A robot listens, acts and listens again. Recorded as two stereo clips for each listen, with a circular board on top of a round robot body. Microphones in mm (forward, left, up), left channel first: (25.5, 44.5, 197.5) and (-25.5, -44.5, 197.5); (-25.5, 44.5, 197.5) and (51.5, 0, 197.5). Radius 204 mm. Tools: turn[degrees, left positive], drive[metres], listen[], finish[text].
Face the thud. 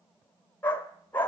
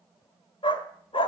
Action: listen[]
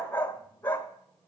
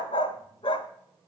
Action: listen[]
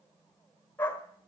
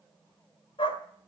Action: finish[I can't make out a thud, only a dog barking.]